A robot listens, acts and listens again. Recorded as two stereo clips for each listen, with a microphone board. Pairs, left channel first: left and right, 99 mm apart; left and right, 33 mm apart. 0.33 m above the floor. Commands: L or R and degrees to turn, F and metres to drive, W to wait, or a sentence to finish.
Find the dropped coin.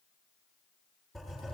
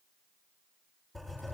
W
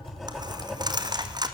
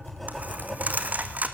R40
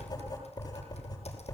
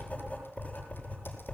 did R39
W
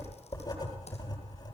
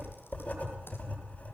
I heard a dropped coin, but can't make it out now. It was about straight ahead or 100° right.